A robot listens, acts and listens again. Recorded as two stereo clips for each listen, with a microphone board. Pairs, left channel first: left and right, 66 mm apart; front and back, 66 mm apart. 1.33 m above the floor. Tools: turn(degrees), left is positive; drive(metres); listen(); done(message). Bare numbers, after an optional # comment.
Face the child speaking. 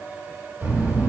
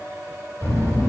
# The child speaking: 40° right.
turn(-40)
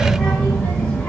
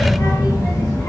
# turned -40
# The child speaking is now 15° left.
turn(15)
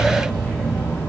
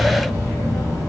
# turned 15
# The child speaking is now 30° left.
turn(30)
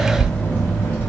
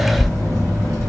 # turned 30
# The child speaking is now 45° left.
turn(45)
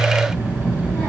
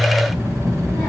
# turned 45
# The child speaking is now 15° left.
turn(15)
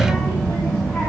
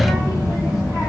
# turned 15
done("Found it: a child speaking, straight ahead, 1 to 2 m away.")